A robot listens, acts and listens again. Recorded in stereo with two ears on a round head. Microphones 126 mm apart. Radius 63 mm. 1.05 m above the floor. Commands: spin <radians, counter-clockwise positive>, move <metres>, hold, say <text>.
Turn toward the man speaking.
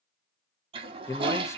spin 0.35
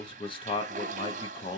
spin 2.36
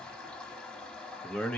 spin 0.17
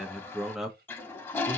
say Facing the man speaking, under 1 m away.